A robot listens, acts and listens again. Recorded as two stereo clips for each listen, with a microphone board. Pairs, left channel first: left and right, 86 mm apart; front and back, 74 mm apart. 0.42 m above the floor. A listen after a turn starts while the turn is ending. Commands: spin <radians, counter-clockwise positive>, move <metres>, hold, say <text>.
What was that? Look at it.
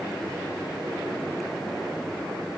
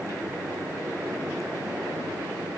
hold
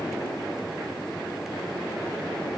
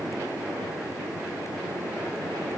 hold
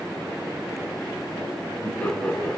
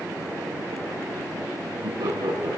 spin 2.88
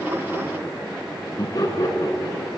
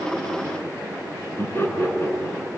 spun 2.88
spin 0.96
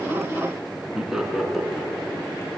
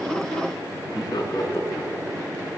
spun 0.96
say Found it: laughter, straight ahead, over 4 m away.